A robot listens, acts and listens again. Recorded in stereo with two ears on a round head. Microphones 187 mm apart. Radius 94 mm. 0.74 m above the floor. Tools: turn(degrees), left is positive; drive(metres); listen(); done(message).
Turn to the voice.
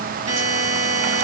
listen()
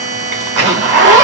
listen()
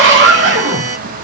done("I can't make out anyone speaking to turn to.")